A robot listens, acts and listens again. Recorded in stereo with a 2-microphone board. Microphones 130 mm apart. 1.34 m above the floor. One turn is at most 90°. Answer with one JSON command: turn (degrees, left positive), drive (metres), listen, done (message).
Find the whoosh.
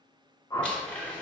{"turn": 30}
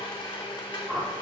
{"done": "Facing the whoosh, 1 to 2 m away."}